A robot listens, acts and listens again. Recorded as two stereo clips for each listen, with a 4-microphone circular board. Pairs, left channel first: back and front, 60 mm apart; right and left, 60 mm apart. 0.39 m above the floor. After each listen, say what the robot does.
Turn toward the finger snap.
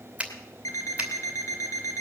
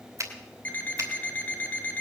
Turn 70° left.
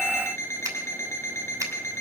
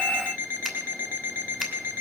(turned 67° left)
Keep listening.
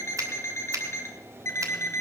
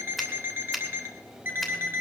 Facing the finger snap, 2 to 4 m away.